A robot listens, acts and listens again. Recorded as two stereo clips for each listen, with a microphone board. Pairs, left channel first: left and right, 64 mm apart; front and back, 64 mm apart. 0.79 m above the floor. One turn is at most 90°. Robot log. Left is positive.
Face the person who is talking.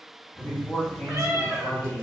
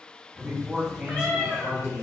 note: The man speaking: 110° left.
cmd yaw +90
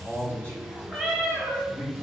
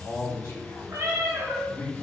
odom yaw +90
note: The man speaking is now 25° left.
cmd yaw +25
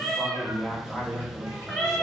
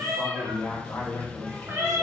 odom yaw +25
end: Found it: a man speaking, straight ahead.